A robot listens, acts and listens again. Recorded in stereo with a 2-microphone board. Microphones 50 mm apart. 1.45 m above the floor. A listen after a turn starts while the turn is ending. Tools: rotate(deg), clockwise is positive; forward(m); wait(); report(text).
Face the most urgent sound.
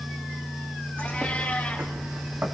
wait()
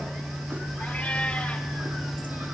wait()
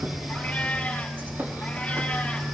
report("I can't make out anything urgent, only a cat meowing and a bird.")